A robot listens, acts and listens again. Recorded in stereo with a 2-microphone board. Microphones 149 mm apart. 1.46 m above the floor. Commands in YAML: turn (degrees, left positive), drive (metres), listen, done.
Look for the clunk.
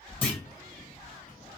turn: 30
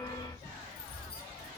listen: true
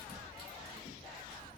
done: "I heard a clunk, but can't make it out now. It was about 20° right or 140° left."